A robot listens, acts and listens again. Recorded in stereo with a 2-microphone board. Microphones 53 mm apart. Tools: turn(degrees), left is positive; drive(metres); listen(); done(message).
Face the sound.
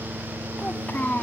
turn(degrees=35)
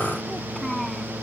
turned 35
done("Facing the child speaking.")